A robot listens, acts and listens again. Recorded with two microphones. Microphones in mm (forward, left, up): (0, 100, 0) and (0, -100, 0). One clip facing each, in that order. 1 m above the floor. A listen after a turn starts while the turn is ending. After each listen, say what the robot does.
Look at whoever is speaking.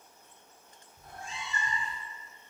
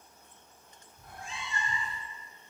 Keep listening.
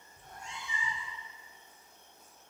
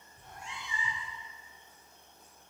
Keep listening.
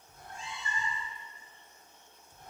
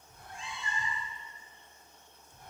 I can't make out anyone speaking to turn to.